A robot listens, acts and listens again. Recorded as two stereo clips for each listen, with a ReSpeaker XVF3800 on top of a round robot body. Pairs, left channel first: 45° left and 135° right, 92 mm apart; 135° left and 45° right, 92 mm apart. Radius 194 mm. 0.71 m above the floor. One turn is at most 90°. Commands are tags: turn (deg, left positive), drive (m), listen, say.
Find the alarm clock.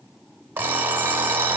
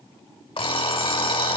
<turn deg="90"/>
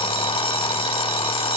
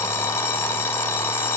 <turn deg="70"/>
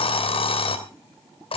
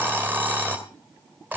<turn deg="25"/>
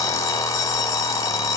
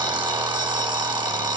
<turn deg="-10"/>
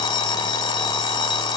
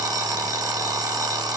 <say>Found it: an alarm clock, straight ahead.</say>